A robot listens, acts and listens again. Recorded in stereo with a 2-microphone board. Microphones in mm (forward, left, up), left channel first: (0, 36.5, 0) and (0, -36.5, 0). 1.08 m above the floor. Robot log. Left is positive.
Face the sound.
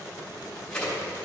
cmd yaw +30
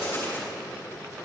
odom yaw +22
note: So it is at 145° left.
cmd yaw +145
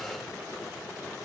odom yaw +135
note: Nothing new. It was at 10° left.
cmd yaw +10
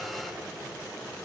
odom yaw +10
end: Facing where the crack came from. I can't hear it now.